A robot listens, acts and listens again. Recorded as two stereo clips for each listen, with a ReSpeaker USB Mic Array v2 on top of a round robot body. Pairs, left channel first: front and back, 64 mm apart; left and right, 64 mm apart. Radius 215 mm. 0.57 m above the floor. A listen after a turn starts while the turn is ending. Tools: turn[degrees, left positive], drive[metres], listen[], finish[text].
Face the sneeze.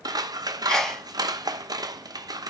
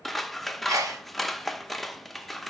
Thought: The sneeze: 80° right.
Action: turn[-80]
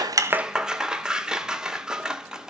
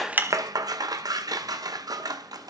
Action: finish[I heard a sneeze from this way, but can't make it out now.]